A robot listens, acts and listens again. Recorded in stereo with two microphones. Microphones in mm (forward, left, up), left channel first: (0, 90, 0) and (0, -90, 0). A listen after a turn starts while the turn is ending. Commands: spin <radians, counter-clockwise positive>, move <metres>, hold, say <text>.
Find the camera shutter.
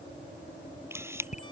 spin -0.52
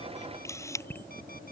spin 0.26
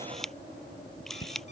say Found it: a camera shutter, straight ahead.